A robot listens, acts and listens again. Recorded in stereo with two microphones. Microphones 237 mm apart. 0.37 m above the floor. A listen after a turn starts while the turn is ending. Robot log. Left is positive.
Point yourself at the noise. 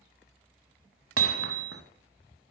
note: The hammering: about 70° right or 110° right.
cmd yaw -70
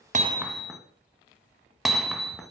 end: Found it: hammering, straight ahead.